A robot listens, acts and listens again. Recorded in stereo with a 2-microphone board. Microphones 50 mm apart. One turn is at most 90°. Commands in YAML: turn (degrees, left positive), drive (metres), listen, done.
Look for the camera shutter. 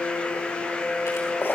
listen: true
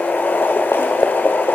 listen: true
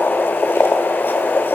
done: "I can't make out a camera shutter, only boiling."